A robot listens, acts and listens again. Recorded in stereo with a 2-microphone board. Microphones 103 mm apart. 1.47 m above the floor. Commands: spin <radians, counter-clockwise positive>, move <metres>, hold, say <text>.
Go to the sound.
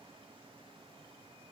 hold
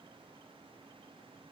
hold
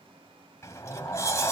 spin 0.52
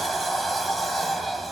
move 1.0
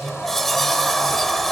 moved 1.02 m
move 1.0
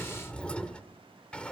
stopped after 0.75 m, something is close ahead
spin 0.26
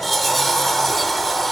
say I am next to the sliding door.